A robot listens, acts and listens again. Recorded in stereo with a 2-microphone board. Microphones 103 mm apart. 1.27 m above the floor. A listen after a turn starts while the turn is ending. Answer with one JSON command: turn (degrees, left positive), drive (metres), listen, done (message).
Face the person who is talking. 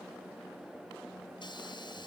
{"listen": true}
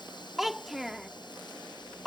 {"turn": 30}
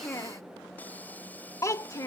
{"turn": 150}
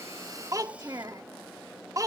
{"turn": -35}
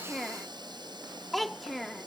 {"done": "Facing the child speaking."}